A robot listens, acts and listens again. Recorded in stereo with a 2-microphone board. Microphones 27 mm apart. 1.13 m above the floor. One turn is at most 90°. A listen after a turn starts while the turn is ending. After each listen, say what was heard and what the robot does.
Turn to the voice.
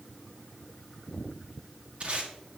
Keep listening.
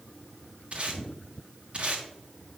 Keep listening.
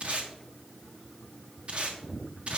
I can't make out anyone speaking, only tape being pulled.